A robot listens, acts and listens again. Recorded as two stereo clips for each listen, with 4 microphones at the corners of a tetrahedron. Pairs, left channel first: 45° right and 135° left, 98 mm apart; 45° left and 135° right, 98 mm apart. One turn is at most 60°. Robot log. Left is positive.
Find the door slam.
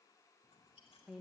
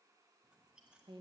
cmd idle
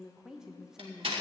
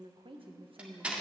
note: The door slam: 145° left.
cmd yaw +60
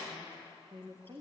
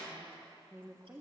note: Nothing new. It was at 85° left.
cmd yaw +60
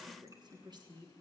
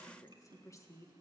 note: Nothing new. It was at 25° left.
cmd yaw +25
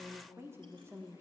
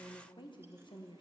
end: I heard a door slam from this way, but can't make it out now.